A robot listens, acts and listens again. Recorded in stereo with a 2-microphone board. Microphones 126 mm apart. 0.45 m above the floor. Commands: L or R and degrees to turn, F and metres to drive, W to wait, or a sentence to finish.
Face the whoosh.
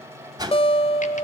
R30
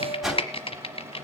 Found it: a whoosh, straight ahead.